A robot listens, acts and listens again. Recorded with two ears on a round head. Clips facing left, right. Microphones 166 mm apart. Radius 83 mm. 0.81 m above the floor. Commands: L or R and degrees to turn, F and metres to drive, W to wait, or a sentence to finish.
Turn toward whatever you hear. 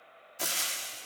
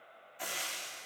L55
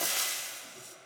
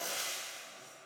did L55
L70
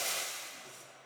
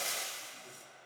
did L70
Found it: frying, straight ahead.